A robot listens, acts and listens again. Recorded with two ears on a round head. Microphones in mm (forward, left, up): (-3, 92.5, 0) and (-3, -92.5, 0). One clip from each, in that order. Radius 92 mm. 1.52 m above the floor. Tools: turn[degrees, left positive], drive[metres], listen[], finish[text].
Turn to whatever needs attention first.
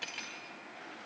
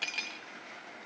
Action: listen[]
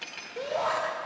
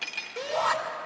Thought: The shout: about 55° right or 125° right.
Action: turn[-55]
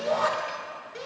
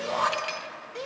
Action: finish[Found it: a shout, straight ahead.]